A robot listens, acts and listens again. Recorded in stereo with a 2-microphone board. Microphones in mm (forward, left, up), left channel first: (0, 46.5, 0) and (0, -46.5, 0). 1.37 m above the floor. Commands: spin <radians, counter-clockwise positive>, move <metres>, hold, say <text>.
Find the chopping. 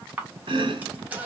spin -1.13
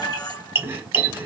spin -0.52
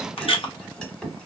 spin 0.17
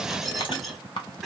say Found it: chopping, straight ahead.